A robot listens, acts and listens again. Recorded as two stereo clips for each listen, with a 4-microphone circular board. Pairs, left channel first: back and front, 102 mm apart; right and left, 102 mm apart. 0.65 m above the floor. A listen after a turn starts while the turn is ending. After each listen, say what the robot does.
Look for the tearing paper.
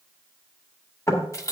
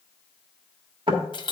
Keep listening.
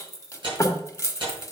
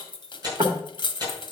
Turn 40° left.
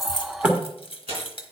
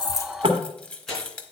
Found it: tearing paper, straight ahead, over 4 m away.